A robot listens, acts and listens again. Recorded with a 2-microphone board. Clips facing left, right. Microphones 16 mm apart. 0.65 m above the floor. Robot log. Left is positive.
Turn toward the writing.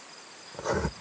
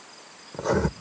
cmd yaw -30
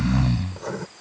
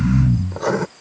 note: So it is at 135° right.
cmd yaw -135
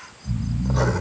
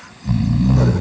cmd idle
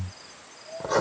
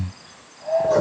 note: The writing is now 30° left.
cmd yaw +30
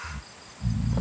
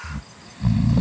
cmd idle
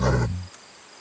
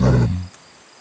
cmd idle
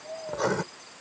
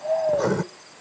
note: The writing is now 15° left.
cmd yaw +15
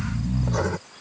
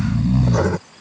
end: Facing the writing.